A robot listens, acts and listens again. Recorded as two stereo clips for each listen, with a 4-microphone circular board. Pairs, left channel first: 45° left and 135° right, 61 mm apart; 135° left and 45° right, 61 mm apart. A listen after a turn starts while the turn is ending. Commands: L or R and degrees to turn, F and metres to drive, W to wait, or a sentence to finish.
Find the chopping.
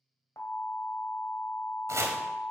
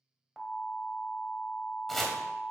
R140
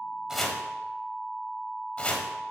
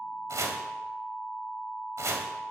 R20
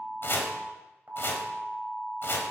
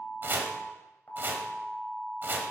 Facing the chopping, 1 to 2 m away.